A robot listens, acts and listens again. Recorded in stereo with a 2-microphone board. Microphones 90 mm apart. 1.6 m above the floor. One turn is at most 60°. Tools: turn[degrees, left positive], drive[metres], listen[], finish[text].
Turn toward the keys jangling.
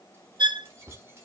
Thought: The keys jangling: about 30° right or 150° right.
Action: turn[-30]
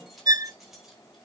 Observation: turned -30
Action: finish[Facing the keys jangling, over 4 m away.]